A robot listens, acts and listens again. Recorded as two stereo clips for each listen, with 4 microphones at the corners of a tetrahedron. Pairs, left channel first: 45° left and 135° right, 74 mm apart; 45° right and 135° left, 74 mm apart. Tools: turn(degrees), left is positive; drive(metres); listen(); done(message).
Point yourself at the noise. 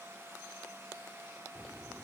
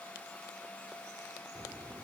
turn(degrees=160)
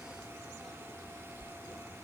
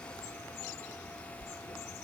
turn(degrees=-10)
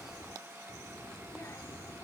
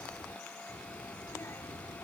done("Found it: a child speaking, straight ahead.")